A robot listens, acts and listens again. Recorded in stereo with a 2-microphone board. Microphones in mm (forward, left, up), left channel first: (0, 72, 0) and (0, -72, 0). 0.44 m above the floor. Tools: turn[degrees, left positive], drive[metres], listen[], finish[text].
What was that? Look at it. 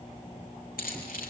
Action: turn[90]
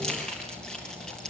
Action: finish[Facing the keys jangling.]